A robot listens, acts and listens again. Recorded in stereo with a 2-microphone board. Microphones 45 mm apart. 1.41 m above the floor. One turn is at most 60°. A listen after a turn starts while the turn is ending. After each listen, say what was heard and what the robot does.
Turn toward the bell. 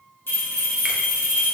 The bell: about 60° left or 120° left. Turn 60° left.
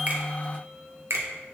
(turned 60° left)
Keep listening.
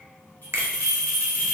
So it is at 55° left. Turn 55° left.
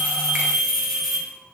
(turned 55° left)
Facing the bell.